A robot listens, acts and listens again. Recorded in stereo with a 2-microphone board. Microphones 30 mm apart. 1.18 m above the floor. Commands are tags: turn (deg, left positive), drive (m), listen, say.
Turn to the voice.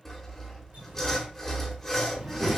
<turn deg="-45"/>
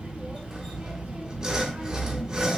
<turn deg="-85"/>
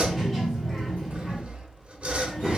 <say>Found it: a child speaking, straight ahead, 2 to 4 m away.</say>